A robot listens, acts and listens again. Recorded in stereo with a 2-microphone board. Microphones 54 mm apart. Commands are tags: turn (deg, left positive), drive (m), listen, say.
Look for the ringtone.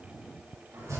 <listen/>
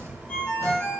<turn deg="20"/>
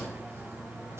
<listen/>
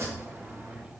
<listen/>
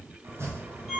<say>Facing the ringtone, 2 to 4 m away.</say>